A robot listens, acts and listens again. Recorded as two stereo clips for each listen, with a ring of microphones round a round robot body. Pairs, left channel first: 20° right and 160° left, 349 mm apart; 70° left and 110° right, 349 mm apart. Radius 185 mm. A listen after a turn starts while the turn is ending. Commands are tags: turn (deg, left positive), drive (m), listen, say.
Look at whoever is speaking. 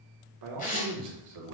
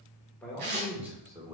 <turn deg="175"/>
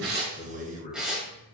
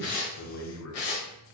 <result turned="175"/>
<turn deg="40"/>
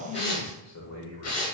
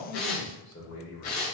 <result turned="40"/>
<turn deg="20"/>
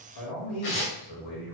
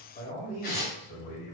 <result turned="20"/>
<say>Facing the man speaking, 2 to 4 m away.</say>